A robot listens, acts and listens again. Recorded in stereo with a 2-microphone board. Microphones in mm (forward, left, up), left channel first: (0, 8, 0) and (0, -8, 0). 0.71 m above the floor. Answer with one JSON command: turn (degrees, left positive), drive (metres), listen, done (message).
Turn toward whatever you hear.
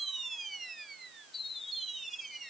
{"listen": true}
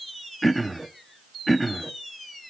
{"turn": 30}
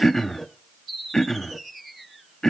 {"turn": 140}
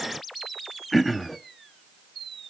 {"done": "Found it: throat clearing, straight ahead, under 1 m away."}